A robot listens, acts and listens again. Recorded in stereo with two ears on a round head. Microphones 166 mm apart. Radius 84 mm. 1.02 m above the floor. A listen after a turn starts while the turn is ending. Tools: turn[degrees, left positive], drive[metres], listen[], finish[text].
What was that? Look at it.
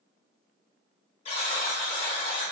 Thought: The buzzer: about 35° left or 145° left.
Action: turn[35]
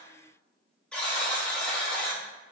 Action: finish[Found it: a buzzer, straight ahead, 1 to 2 m away.]